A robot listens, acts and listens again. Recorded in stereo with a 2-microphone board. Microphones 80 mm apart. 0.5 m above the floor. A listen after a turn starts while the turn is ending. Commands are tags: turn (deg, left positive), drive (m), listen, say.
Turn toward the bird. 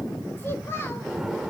<turn deg="-30"/>
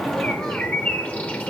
<turn deg="20"/>
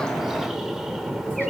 <say>Facing the bird, 1 to 2 m away.</say>